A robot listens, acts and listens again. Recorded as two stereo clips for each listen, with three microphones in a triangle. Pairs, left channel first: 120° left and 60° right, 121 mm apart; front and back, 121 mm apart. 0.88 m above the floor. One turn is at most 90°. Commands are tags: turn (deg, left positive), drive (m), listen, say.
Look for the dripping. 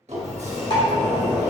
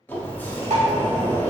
<turn deg="90"/>
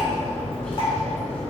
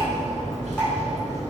<turn deg="70"/>
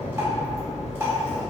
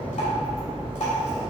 <listen/>
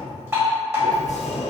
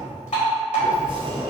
<say>Facing the dripping, 1 to 2 m away.</say>